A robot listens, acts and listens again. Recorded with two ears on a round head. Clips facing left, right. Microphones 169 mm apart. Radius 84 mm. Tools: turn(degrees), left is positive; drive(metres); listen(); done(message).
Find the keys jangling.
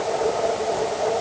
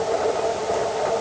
listen()
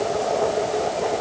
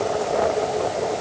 listen()
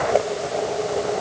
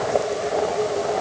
done("I can't make out keys jangling to turn to.")